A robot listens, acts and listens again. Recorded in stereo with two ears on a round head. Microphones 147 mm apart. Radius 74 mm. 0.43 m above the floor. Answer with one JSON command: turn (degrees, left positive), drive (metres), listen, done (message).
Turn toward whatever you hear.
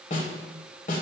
{"turn": 55}
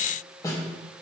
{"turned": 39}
{"turn": 25}
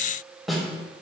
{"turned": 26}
{"done": "Facing the snare drum, 1 to 2 m away."}